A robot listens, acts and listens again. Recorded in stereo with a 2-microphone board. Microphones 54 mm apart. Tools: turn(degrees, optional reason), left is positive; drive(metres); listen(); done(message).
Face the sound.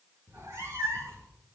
turn(degrees=-90)
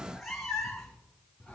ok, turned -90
turn(degrees=10, reason="So it is at 10° left.")
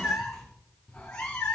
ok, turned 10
turn(degrees=20, reason="The cat meowing is now 20° left.")
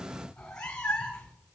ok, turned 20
turn(degrees=15, reason="The cat meowing is now 15° left.")
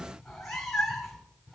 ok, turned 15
done("Found it: a cat meowing, straight ahead.")